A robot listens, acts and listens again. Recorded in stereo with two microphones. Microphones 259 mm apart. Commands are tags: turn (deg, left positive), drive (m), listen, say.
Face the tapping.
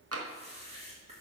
<turn deg="-65"/>
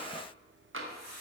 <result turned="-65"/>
<turn deg="-50"/>
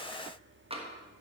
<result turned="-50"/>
<turn deg="-20"/>
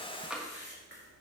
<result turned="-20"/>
<say>Facing the tapping.</say>